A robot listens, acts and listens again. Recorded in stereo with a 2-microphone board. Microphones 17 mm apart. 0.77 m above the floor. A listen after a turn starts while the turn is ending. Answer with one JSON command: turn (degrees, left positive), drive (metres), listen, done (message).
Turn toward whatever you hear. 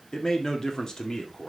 {"turn": 35}
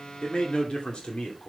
{"turn": 115}
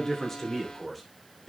{"turn": 10}
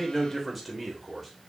{"done": "Facing the man speaking, 2 to 4 m away."}